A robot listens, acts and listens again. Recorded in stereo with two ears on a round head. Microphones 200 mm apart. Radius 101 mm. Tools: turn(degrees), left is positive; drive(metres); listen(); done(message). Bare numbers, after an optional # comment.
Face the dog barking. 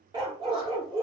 # The dog barking: about 20° right or 160° right.
turn(-20)
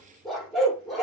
done("Found it: a dog barking, straight ahead.")